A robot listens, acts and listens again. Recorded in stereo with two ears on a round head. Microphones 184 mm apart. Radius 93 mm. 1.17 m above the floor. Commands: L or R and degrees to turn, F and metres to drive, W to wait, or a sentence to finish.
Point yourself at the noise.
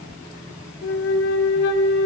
L60
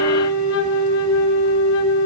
L65
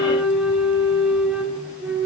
Found it: a flute, straight ahead.